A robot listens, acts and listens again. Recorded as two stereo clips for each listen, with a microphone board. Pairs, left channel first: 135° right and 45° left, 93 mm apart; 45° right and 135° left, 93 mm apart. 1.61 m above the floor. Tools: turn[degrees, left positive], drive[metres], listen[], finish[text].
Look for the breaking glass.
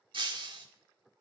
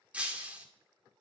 Thought: The breaking glass: 60° left.
Action: turn[60]
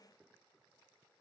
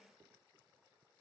Action: finish[I heard breaking glass from this way, but can't make it out now.]